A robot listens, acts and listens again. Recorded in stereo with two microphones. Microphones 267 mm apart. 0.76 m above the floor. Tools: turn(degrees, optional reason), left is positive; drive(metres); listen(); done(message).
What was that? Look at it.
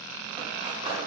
turn(degrees=-20, reason="The cutlery clinking: about 20° right or 160° right.")
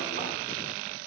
listen()
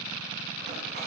listen()
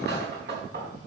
turn(degrees=-140, reason="So it is at 140° right.")
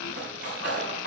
turn(degrees=-40, reason="The cutlery clinking is now 40° right.")
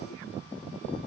listen()
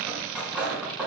done("Found it: cutlery clinking, straight ahead, over 4 m away.")